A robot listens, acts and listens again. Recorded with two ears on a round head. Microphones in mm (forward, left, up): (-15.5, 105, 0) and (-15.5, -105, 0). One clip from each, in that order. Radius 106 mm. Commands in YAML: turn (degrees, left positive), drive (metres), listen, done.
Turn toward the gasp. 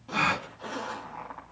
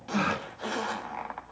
turn: 40
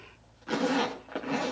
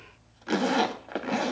listen: true
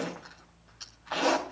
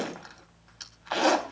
done: "I heard a gasp, but can't make it out now. It was about straight ahead or 100° left."